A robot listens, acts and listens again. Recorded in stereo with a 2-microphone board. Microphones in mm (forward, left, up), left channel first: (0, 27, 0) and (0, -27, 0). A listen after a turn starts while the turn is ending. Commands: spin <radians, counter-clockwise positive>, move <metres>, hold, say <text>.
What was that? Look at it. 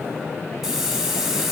spin -0.52
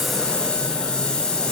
spin 0.35
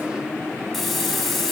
say Found it: a hiss, straight ahead, 1 to 2 m away.